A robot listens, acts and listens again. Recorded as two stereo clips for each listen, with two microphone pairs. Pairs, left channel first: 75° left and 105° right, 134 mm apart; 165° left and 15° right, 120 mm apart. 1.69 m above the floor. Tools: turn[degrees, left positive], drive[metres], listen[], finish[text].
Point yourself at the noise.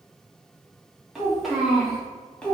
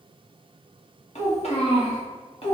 Thought: The child speaking: 155° left.
Action: turn[155]
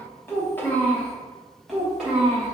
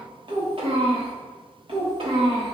Thought: The child speaking is now 25° right.
Action: turn[-25]
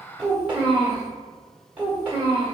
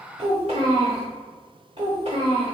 Thought: The child speaking is now 25° right.
Action: turn[-25]
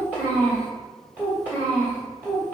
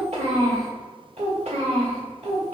Action: finish[Found it: a child speaking, straight ahead.]